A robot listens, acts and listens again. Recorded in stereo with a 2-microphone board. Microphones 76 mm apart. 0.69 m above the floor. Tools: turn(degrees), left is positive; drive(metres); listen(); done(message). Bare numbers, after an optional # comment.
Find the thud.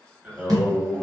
# The thud: about 60° right or 120° right.
turn(-60)
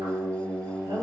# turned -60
listen()
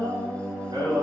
done("I heard a thud, but can't make it out now. It was about straight ahead or 60° right.")